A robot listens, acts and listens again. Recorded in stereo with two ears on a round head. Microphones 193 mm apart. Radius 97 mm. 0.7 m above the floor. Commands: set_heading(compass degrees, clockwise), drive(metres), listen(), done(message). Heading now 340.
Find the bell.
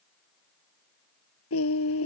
listen()
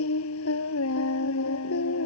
listen()
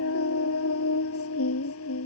done("I can't make out a bell to turn to.")